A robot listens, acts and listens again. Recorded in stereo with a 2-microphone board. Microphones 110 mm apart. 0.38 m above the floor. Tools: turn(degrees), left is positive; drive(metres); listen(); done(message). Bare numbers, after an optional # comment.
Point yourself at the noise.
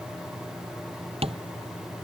# The tapping: about 65° right or 115° right.
turn(-65)
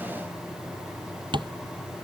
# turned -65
# So it is at 45° right.
turn(-45)
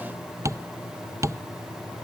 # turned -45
# The tapping is now 30° right.
turn(-30)
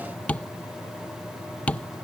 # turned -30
# The tapping is now 10° left.
turn(10)
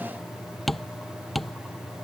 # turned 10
done("Found it: tapping, straight ahead.")